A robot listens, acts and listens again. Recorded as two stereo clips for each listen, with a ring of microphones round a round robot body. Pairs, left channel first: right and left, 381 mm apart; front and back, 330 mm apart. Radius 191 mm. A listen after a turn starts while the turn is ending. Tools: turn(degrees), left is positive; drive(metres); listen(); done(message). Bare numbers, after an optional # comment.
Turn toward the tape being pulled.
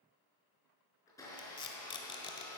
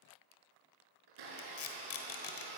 # The tape being pulled: 15° right.
turn(-15)
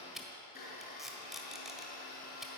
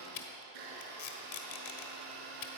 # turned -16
done("Found it: tape being pulled, straight ahead, 1 to 2 m away.")